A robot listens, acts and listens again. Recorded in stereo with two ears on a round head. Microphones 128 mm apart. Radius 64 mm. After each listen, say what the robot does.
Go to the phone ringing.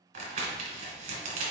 Keep listening.
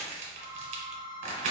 Turn 30° right.
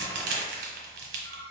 Turn 15° left.
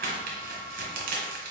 Keep listening.
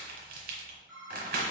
Drive 1.0 m forward.
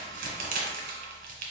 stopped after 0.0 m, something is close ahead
Keep listening.
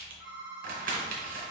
Blocked. The phone ringing is further on, straight ahead.